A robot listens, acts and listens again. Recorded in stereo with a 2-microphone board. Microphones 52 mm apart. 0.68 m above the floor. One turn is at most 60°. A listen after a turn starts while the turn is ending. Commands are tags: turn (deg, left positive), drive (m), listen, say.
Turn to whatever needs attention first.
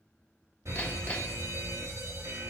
<turn deg="-60"/>
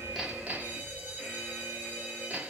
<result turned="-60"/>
<turn deg="-30"/>
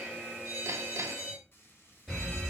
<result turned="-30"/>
<turn deg="15"/>
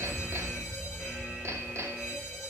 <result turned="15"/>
<say>Facing the fire alarm, over 4 m away.</say>